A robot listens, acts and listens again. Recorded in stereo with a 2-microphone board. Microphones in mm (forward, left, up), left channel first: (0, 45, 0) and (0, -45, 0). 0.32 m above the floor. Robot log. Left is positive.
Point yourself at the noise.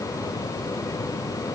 cmd idle
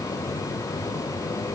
cmd idle
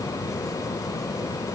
end: I can't make out anything to turn to.